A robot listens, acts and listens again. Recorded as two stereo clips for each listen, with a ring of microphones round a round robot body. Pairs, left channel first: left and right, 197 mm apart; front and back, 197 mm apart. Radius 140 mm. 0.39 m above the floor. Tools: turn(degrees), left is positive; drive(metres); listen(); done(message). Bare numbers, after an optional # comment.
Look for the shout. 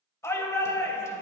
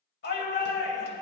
# The shout: 15° left.
turn(15)
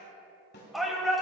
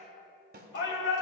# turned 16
done("Found it: a shout, straight ahead.")